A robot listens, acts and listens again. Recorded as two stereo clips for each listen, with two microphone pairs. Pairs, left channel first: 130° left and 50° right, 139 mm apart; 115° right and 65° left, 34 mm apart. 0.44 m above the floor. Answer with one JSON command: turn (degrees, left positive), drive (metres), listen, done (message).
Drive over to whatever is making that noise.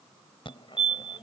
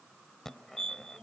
{"turn": 175}
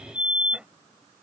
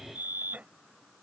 {"turn": 30}
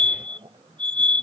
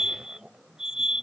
{"drive": 1.0}
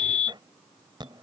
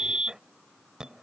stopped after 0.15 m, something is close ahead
{"done": "Something is in my way. I am facing the fire alarm but have not reached it."}